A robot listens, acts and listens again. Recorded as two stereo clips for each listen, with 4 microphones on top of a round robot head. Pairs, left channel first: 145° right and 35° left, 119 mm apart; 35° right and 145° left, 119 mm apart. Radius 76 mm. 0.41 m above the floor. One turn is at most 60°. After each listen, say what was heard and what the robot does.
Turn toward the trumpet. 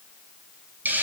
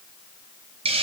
Keep listening.
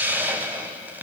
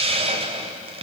Keep listening.
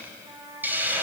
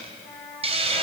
The trumpet: 15° left. Turn 15° left.
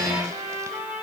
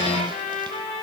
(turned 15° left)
Facing the trumpet.